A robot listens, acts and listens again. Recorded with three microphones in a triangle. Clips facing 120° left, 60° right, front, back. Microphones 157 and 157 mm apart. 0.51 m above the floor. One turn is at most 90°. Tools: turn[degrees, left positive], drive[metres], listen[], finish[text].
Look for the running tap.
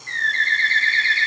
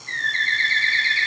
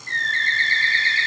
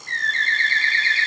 Action: listen[]
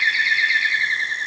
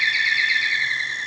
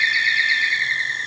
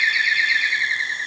Action: listen[]
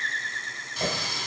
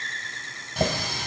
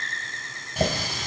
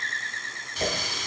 Thought: The running tap: 40° right.
Action: turn[-40]
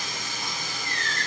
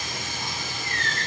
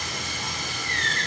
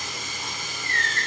Action: finish[Facing the running tap, 2 to 4 m away.]